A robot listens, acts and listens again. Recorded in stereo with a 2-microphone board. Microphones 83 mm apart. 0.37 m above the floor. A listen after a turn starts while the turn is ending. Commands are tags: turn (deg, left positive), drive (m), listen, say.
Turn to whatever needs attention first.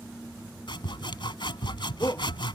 <turn deg="30"/>
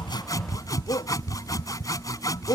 <turn deg="120"/>
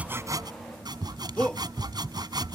<turn deg="10"/>
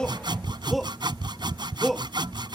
<say>Found it: a shout, straight ahead.</say>